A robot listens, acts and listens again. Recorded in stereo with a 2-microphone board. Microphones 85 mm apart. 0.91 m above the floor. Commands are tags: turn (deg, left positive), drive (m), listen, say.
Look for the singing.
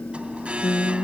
<turn deg="60"/>
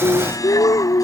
<turn deg="60"/>
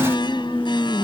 <say>Found it: singing, straight ahead.</say>